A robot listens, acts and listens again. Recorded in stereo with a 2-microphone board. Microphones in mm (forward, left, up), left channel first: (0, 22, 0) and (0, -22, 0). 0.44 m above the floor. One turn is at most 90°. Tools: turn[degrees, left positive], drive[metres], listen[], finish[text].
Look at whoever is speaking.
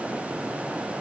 Action: listen[]
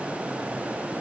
Action: listen[]
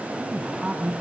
Action: turn[-30]
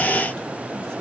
Action: listen[]
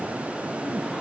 Action: listen[]
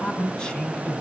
Thought: So it is at 20° left.
Action: turn[20]
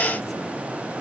Action: listen[]
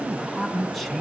Action: finish[Facing the man speaking, 2 to 4 m away.]